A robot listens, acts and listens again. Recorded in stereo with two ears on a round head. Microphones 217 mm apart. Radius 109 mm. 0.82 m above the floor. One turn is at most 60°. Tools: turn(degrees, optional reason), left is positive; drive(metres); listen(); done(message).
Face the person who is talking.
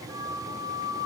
listen()
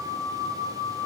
listen()
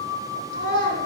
turn(degrees=-55, reason="The child speaking: about 55° right or 125° right.")
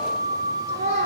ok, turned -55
turn(degrees=-60, reason="So it is at 75° right.")
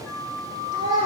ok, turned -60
turn(degrees=-20, reason="The child speaking is now 20° right.")
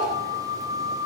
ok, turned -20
done("Facing the child speaking.")